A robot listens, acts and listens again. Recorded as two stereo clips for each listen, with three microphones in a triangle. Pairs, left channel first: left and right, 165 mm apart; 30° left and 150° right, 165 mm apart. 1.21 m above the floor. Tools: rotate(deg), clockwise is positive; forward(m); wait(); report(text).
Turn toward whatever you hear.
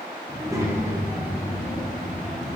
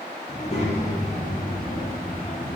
report("Facing the child speaking.")